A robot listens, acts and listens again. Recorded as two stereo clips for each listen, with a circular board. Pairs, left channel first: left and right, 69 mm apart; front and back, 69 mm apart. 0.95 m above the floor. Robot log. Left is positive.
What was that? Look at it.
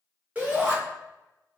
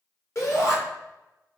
note: The shout: 25° right.
cmd yaw -25
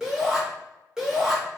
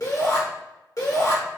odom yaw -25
note: The shout is now 10° right.
cmd yaw -10
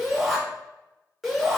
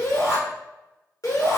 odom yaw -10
end: Facing the shout, 1 to 2 m away.